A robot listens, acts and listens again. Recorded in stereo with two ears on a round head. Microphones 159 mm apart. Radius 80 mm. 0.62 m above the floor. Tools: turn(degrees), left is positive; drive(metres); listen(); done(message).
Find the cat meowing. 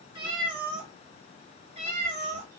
turn(degrees=-40)
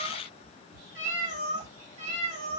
turn(degrees=-95)
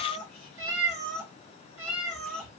turn(degrees=-15)
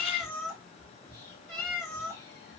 done("Facing the cat meowing, 2 to 4 m away.")